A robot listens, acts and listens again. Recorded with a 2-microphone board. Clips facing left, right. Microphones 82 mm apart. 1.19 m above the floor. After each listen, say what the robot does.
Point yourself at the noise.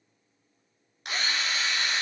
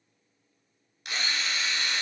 Turn 50° left.
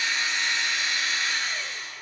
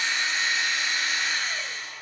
Facing the drill.